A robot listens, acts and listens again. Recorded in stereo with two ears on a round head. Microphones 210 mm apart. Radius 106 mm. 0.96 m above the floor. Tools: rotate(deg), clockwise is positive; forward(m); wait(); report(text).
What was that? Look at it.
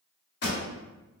rotate(-55)
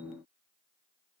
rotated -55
wait()
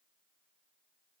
report("I heard a pop, but can't make it out now. It was about straight ahead or 70° left.")